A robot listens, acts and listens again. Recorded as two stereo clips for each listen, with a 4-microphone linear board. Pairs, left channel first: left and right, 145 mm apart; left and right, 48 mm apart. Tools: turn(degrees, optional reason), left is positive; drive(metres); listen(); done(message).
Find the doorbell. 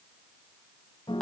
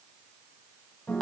listen()
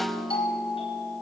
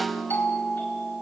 turn(degrees=40, reason="The doorbell: about 40° left or 140° left.")
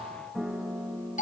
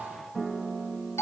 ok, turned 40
turn(degrees=95, reason="So it is at 95° left.")
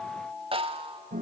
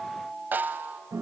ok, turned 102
done("Found it: a doorbell, straight ahead, over 4 m away.")